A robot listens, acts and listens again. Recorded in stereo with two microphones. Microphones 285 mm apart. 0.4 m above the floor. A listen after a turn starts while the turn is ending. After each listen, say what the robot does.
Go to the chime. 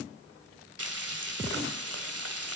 Keep listening.
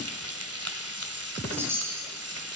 Turn 30° right.
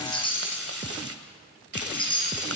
Turn 20° left.
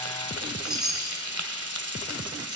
Drive 1.0 m forward.
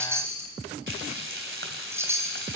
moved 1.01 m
Turn 10° right.
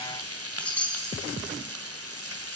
Drive 1.0 m forward.
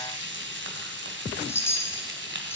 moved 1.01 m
Turn 10° left.
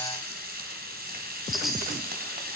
Drive 1.0 m forward.
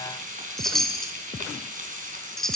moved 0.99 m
Drive 1.0 m forward.
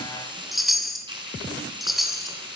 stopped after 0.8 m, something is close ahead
Arrived at the chime, straight ahead.